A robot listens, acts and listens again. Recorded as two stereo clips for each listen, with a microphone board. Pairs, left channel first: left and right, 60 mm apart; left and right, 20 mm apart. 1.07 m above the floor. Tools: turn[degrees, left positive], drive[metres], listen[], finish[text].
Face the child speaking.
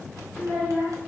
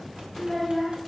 Thought: The child speaking: about 45° left or 135° left.
Action: turn[45]
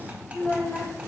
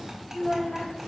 Thought: So it is at 85° left.
Action: turn[85]
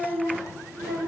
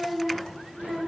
Action: finish[Facing the child speaking, 2 to 4 m away.]